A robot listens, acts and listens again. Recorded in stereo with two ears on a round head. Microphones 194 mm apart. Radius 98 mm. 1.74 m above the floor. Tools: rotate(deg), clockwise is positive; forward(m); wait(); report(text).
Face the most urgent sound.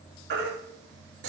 rotate(55)
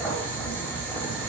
wait()
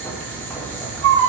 rotate(70)
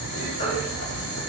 rotate(-30)
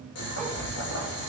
wait()
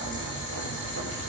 wait()
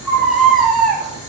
report("Found it: a baby crying, straight ahead.")